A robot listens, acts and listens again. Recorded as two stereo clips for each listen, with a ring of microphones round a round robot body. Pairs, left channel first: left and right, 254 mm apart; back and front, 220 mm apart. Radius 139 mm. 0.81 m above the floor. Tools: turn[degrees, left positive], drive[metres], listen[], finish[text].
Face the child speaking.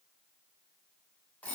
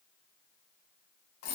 Action: listen[]
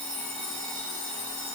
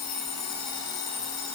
Action: listen[]
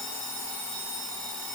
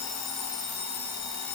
Action: finish[I can't make out a child speaking to turn to.]